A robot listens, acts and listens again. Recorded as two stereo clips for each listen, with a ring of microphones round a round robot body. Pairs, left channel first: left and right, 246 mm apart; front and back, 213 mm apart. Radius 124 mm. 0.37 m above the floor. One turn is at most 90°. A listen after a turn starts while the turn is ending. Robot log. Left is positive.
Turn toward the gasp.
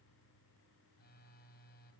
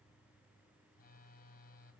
cmd idle
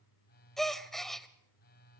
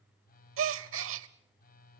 note: The gasp: straight behind.
cmd yaw +90
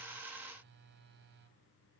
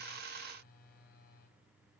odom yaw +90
note: Nothing new. It was at 90° left.
cmd yaw +90
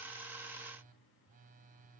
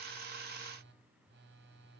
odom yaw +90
end: Facing where the gasp came from. I can't hear it now.